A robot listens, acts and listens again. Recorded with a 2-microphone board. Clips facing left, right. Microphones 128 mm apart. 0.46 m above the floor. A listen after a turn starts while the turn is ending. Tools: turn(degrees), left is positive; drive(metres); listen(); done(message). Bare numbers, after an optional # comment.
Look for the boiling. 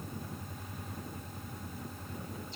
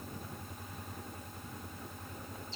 listen()
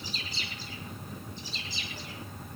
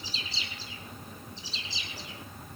listen()
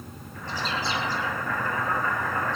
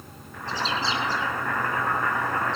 turn(-90)
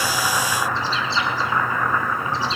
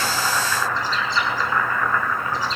# So it is at 15° left.
turn(15)
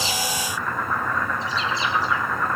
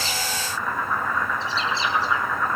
done("Facing the boiling, over 4 m away.")